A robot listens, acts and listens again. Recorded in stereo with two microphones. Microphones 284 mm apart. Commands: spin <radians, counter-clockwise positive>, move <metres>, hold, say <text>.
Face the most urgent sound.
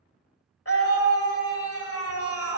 spin 0.87
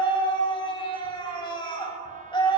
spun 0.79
spin 0.35
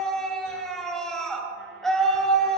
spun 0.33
say Found it: a scream, straight ahead.